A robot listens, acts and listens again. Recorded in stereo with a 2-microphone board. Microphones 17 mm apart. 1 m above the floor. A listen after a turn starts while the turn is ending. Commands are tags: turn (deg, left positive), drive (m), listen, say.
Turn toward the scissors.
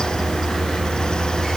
<listen/>
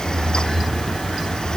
<listen/>
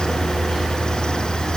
<say>I can't make out scissors to turn to.</say>